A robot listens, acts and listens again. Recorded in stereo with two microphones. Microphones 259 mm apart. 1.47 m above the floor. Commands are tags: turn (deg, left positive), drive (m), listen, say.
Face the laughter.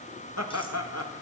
<turn deg="70"/>
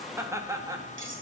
<turn deg="-15"/>
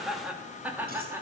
<turn deg="-10"/>
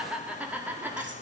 <turn deg="-10"/>
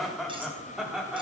<say>Facing the laughter, over 4 m away.</say>